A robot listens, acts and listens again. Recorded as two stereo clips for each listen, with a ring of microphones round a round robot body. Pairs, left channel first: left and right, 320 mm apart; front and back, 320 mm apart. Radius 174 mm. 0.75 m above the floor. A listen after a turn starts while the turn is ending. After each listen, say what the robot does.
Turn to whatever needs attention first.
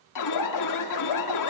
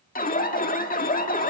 Turn 60° left.
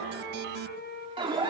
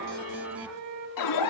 Turn 15° right.
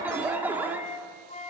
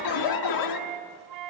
Found it: an alarm, straight ahead.